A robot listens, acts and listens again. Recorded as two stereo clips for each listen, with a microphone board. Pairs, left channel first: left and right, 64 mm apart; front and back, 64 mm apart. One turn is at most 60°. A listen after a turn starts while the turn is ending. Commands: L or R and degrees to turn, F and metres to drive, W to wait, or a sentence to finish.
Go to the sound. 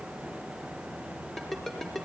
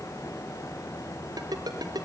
L60
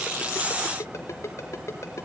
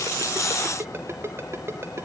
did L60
L60
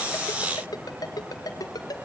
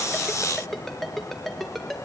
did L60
L60
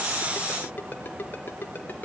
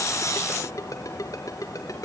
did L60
L30
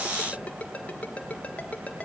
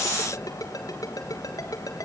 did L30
L20
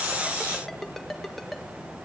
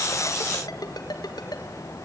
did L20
F1.0
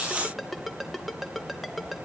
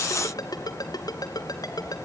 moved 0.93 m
F1.0
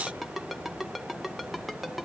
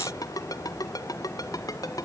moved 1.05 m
F1.0
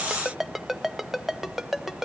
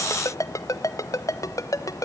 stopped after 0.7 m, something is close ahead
Arrived at the ringtone, straight ahead.